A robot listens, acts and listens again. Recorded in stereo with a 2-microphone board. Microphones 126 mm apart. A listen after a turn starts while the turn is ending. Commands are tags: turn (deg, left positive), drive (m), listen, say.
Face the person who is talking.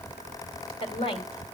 <turn deg="50"/>
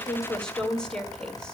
<say>Facing the woman speaking, 2 to 4 m away.</say>